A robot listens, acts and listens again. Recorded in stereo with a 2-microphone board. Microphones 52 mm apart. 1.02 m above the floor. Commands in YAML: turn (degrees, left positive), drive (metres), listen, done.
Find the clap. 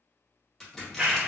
turn: -25
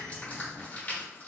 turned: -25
turn: -130
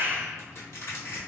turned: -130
turn: -50
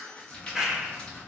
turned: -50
done: "Facing the clap."